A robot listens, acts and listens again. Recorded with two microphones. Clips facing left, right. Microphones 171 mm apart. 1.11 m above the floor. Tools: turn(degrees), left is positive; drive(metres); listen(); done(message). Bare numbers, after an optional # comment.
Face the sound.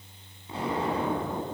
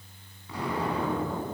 # The explosion: about 25° left or 155° left.
turn(25)
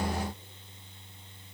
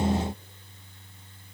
listen()
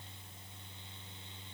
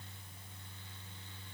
done("I heard an explosion, but can't make it out now. It was about straight ahead or 130° left.")